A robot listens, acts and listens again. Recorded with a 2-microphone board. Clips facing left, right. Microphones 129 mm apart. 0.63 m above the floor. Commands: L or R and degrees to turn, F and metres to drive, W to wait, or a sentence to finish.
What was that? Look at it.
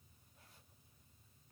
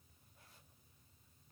W
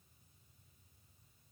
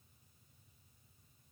W
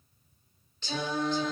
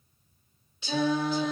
R30
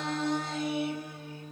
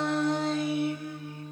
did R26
L35
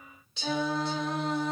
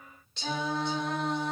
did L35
Facing the singing.